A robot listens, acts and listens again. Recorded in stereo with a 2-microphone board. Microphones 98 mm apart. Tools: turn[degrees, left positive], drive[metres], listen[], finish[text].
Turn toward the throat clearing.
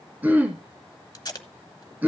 Thought: The throat clearing: about 15° right or 165° right.
Action: turn[-15]
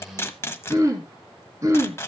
Thought: So it is at 150° right.
Action: turn[-150]
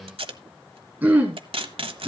Thought: The throat clearing is now 20° right.
Action: turn[-20]
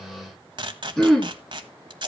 Action: finish[Found it: throat clearing, straight ahead, 2 to 4 m away.]